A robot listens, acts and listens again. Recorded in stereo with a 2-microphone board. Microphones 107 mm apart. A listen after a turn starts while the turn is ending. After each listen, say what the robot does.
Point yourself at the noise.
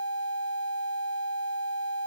Keep listening.
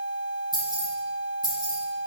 Turn 40° right.
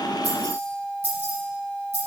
Turn 95° right.
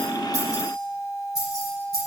Facing the keys jangling.